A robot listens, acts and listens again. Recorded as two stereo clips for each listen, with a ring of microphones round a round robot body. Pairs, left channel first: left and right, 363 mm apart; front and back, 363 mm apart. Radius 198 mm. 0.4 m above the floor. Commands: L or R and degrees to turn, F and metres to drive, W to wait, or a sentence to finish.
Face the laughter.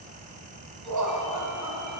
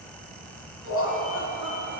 R60
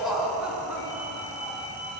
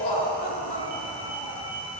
Facing the laughter.